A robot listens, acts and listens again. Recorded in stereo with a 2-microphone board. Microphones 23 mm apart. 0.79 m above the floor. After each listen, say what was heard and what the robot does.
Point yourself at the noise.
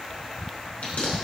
Turn 90° left.
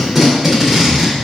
So it is at 10° right. Turn 10° right.
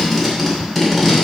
Found it: tape being pulled, straight ahead, 2 to 4 m away.